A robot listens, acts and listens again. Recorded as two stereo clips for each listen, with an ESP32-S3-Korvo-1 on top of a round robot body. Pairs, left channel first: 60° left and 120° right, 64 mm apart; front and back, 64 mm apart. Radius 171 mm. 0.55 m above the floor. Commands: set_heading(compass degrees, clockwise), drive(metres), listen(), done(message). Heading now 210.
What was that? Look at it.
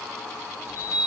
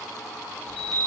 set_heading(125)
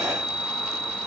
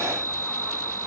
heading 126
done("Found it: a chime, straight ahead, 1 to 2 m away.")